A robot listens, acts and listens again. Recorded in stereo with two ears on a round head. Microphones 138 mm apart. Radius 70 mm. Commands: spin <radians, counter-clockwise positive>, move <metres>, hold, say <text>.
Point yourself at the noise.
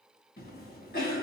spin 1.05
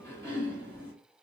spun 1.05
spin 0.26
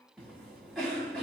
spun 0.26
say Found it: a cough, straight ahead.